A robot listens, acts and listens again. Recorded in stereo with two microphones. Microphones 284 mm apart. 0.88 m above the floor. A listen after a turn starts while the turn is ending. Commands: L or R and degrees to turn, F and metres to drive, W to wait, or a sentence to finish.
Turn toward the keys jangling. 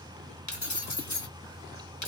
L90
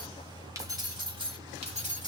R25
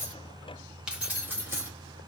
R10
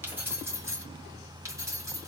R10
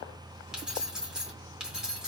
Facing the keys jangling, 2 to 4 m away.